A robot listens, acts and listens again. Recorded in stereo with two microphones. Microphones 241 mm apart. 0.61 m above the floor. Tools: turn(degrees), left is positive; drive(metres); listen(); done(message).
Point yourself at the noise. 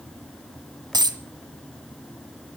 turn(degrees=-15)
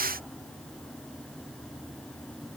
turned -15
listen()
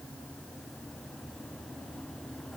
done("I heard a dropped coin, but can't make it out now. It was about straight ahead or 150° right.")